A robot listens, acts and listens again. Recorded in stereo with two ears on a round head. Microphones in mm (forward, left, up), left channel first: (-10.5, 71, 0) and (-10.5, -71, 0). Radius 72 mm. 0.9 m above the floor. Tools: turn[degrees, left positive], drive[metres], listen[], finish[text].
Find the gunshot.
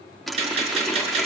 Thought: The gunshot: about 45° right or 135° right.
Action: turn[-45]
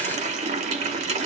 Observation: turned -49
Action: listen[]
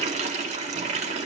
Action: finish[I heard a gunshot, but can't make it out now. It was about 5° left or 85° right.]